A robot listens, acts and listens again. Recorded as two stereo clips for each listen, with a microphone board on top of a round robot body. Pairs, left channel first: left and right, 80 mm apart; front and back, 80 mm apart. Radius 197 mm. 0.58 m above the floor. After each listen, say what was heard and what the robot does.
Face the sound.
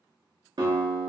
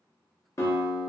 The guitar: 55° right. Turn 55° right.
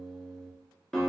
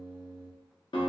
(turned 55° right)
The guitar is now 10° left. Turn 10° left.
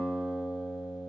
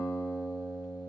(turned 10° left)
Found it: a guitar, straight ahead, under 1 m away.